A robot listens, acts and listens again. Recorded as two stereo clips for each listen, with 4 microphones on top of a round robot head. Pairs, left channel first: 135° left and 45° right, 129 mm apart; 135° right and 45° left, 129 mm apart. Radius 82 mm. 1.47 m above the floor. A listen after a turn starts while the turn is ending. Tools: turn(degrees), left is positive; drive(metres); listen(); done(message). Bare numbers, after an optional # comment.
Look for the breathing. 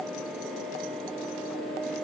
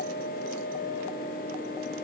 listen()
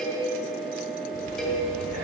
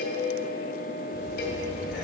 # The breathing: 40° right.
turn(-40)
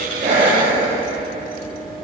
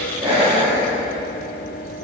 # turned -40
# The breathing is now 10° left.
turn(10)
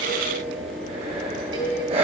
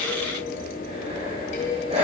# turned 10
done("Facing the breathing, 2 to 4 m away.")